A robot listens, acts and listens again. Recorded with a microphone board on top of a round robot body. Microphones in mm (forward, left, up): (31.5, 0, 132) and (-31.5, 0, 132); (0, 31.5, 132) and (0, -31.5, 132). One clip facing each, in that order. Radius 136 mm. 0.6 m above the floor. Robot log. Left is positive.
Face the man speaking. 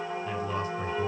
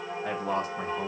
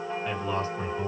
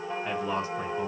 note: The man speaking: 165° right.
cmd yaw -165
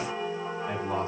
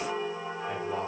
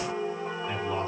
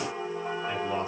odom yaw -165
cmd idle
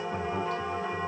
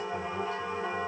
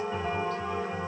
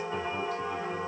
cmd idle
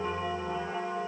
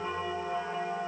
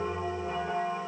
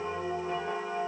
end: Facing where the man speaking came from. I can't hear it now.